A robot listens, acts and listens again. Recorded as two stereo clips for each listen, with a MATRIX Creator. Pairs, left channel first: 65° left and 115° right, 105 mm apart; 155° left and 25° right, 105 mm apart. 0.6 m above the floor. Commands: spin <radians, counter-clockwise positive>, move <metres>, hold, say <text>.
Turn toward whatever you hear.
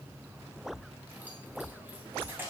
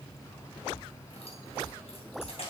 spin 3.05
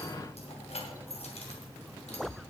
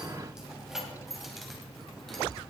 spin 1.13
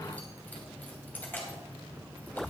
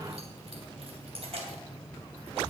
say Found it: keys jangling, straight ahead.